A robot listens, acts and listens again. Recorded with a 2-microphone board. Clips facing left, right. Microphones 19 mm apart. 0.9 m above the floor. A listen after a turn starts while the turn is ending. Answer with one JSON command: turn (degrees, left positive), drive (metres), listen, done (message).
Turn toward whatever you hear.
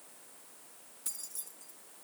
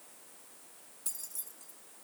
{"turn": 30}
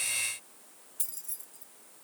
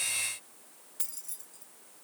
{"turn": -25}
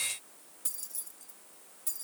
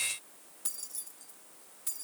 {"turn": -10}
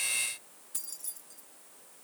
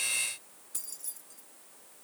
{"done": "Found it: keys jangling, straight ahead, 1 to 2 m away."}